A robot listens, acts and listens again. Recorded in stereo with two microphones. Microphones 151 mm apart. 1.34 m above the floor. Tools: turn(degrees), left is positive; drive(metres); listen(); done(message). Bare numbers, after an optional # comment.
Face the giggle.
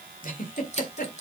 # The giggle: about 65° left or 115° left.
turn(65)
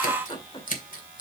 # So it is at 40° left.
turn(40)
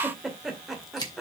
done("Found it: a giggle, straight ahead, 1 to 2 m away.")